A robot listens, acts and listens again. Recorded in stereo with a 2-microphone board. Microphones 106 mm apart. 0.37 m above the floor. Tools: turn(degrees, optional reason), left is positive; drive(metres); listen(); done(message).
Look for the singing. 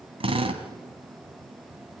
listen()
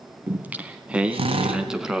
turn(degrees=-30)
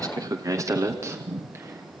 turn(degrees=-155, reason="So it is at 155° right.")
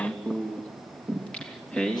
turn(degrees=10, reason="The singing is now 10° left.")
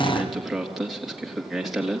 done("Facing the singing, 2 to 4 m away.")